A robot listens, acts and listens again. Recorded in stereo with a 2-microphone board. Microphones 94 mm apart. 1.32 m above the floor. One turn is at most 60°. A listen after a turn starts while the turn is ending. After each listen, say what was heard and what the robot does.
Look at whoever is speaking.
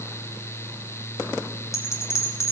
Keep listening.
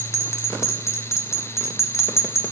Keep listening.
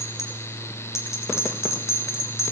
I can't make out anyone speaking, only a bell.